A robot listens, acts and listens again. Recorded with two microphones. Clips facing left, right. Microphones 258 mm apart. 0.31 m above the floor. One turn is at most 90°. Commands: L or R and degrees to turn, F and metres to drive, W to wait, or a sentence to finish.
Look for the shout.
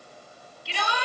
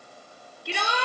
R55
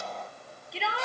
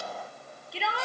Facing the shout.